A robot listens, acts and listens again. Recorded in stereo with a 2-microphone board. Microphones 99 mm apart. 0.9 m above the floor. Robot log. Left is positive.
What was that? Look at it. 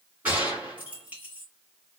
note: The gunshot: about 15° right or 165° right.
cmd yaw -15
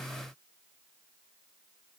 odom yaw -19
cmd idle
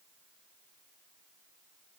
end: I heard a gunshot, but can't make it out now. It was about 5° left or 145° right.